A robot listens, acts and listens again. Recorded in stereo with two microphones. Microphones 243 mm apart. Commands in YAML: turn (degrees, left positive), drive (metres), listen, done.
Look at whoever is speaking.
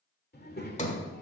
turn: 40
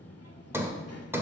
turn: 100
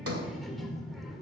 done: "Facing the child speaking."